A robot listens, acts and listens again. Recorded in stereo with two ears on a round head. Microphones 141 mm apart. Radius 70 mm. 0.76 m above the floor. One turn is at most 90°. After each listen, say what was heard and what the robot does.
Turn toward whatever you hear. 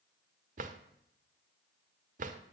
The drawer: about 55° right or 125° right. Turn 55° right.
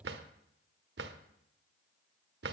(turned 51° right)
So it is at 75° right. Turn 75° right.
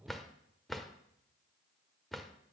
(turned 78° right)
Facing the drawer, 1 to 2 m away.